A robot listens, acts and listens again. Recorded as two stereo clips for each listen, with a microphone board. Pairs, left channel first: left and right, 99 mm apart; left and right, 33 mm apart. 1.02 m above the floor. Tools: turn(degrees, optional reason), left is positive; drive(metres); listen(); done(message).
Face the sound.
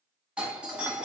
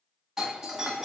turn(degrees=-30)
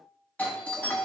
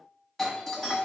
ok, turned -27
turn(degrees=15, reason="So it is at 15° left.")
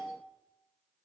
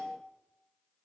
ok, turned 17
done("Facing the doorbell, 1 to 2 m away.")